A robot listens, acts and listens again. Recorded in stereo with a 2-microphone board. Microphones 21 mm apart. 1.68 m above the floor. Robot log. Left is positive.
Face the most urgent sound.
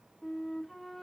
cmd idle
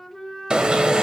note: The alarm: about 45° right or 135° right.
cmd yaw -45
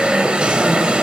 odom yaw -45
note: So it is at 85° right.
cmd yaw -85
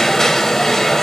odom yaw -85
note: The alarm is now 20° left.
cmd yaw +20
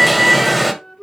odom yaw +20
end: Facing the alarm, 1 to 2 m away.